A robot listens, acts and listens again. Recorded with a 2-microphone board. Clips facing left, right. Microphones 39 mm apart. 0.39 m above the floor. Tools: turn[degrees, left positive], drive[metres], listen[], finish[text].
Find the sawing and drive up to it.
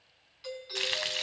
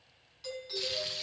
Action: listen[]
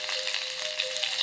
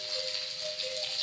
Action: listen[]
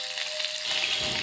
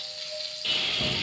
Thought: The sawing: about 35° right or 145° right.
Action: turn[-35]
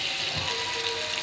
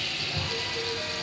Action: drive[1.0]
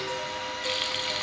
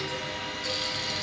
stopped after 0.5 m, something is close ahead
Action: finish[Something is in my way. I am facing the sawing but have not reached it.]